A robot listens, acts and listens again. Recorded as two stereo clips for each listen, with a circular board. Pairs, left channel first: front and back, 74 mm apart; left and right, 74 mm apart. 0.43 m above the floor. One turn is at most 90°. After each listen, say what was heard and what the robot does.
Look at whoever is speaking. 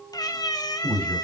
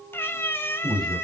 The man speaking: 75° left. Turn 75° left.
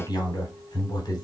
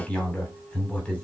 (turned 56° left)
The man speaking is now 20° left. Turn 20° left.
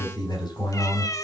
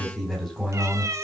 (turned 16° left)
Found it: a man speaking, straight ahead, 2 to 4 m away.